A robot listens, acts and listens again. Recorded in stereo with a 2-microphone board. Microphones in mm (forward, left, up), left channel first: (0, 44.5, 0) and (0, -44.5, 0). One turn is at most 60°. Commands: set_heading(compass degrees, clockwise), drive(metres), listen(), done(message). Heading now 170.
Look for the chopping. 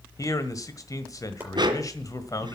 set_heading(190)
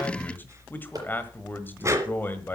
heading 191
listen()
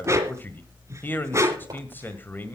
listen()
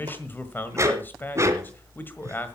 done("I heard chopping, but can't make it out now. It was about straight ahead or 140° right.")